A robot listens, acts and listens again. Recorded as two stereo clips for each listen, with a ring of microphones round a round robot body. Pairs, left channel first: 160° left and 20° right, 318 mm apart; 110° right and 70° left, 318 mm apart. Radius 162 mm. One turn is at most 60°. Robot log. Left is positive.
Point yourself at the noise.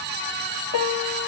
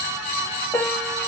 note: The piano: 160° left.
cmd yaw +60
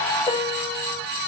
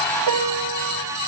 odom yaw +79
note: The piano is now 80° left.
cmd yaw +60
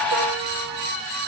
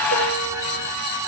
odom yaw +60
note: Nothing new. It was at 20° left.
cmd yaw +20
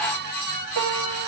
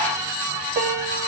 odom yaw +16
end: Found it: a piano, straight ahead.